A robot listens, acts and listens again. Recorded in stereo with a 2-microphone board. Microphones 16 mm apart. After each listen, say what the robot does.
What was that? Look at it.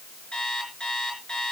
Turn 90° left.
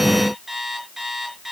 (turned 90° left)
Facing the alarm clock.